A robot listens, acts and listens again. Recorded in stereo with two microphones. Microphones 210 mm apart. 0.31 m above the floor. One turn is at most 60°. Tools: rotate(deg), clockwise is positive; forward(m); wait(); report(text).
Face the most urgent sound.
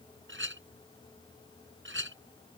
wait()
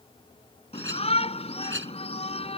rotate(-30)
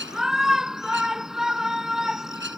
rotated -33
report("Found it: a shout, straight ahead.")